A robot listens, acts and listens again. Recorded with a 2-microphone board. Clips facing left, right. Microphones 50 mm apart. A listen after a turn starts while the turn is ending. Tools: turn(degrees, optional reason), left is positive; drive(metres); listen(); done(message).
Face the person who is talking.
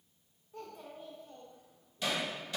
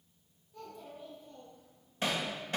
turn(degrees=50, reason="The child speaking: about 50° left or 130° left.")
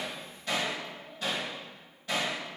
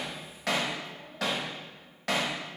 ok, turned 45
listen()
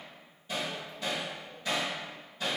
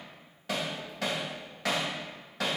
listen()
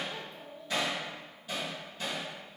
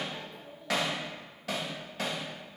turn(degrees=85, reason="So it is at 85° left.")
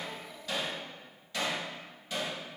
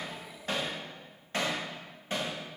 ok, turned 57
turn(degrees=25, reason="Nothing new. It was at 25° left.")
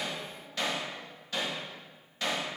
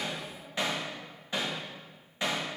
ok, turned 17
turn(degrees=10, reason="Nothing new. It was at 10° left.")
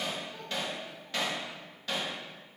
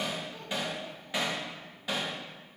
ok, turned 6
done("Facing where the child speaking came from. I can't hear it now.")